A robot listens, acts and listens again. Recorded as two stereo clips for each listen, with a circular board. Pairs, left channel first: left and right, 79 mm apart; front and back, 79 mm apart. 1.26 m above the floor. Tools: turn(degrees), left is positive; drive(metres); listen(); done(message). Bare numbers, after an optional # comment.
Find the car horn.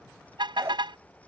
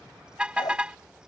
# The car horn: 105° right.
turn(-105)
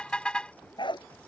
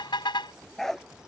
# The car horn is now 15° left.
turn(15)
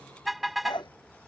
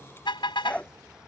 done("Found it: a car horn, straight ahead.")